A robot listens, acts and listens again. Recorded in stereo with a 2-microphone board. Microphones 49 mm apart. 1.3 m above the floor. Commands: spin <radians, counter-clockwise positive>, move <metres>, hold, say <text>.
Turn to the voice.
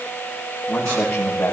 spin 0.35
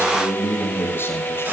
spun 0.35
spin 2.27
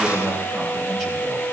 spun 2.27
say Facing the man speaking, over 4 m away.